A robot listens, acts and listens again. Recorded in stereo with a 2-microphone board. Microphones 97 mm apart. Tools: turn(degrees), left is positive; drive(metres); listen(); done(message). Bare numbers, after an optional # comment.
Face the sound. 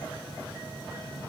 listen()
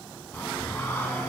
# The singing: about 20° left or 160° left.
turn(20)
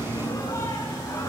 # The singing: about 30° left or 150° left.
turn(30)
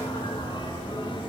# So it is at 125° left.
turn(125)
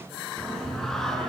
done("Found it: singing, straight ahead.")